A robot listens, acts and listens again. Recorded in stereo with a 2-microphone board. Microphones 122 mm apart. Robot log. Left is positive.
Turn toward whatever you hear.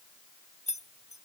note: The keys jangling: about 70° left or 110° left.
cmd yaw +70
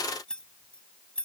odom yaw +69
note: So it is at 10° left.
cmd yaw +10
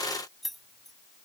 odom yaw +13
end: Found it: keys jangling, straight ahead.